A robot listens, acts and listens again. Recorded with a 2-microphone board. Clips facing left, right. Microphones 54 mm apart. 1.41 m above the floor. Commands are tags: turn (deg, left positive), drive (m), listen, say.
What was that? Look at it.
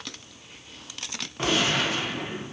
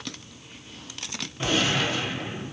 <turn deg="90"/>
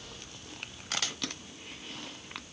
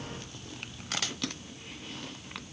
<say>Facing where the gunshot came from. I can't hear it now.</say>